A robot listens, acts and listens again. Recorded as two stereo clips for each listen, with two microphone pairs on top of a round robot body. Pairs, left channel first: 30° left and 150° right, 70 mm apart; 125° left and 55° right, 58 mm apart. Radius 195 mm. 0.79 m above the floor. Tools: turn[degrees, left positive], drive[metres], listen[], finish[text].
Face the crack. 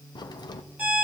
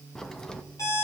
Thought: The crack: 40° left.
Action: turn[40]
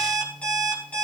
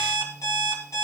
Action: finish[Facing where the crack came from. I can't hear it now.]